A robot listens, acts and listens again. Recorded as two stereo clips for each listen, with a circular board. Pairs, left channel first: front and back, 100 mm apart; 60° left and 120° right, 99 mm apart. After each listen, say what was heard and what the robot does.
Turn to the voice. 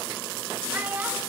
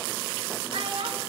The child speaking: 110° right. Turn 110° right.
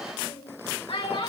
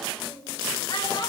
The child speaking is now 25° left. Turn 25° left.
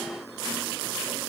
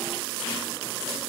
Keep listening.
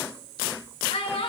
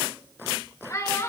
Facing the child speaking, 2 to 4 m away.